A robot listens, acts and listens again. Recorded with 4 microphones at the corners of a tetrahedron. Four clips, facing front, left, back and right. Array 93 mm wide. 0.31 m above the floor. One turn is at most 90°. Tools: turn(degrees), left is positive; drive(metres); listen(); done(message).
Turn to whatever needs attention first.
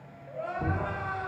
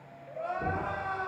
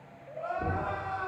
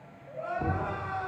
turn(degrees=20)
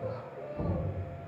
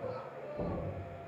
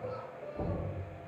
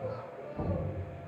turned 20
done("Facing the crying, 1 to 2 m away.")